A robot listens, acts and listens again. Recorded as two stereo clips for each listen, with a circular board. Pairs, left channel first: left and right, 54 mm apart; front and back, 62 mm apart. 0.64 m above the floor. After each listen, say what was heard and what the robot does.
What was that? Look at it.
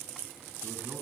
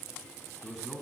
The man speaking: 95° right. Turn 95° right.
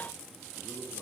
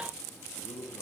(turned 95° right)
Found it: a man speaking, straight ahead, over 4 m away.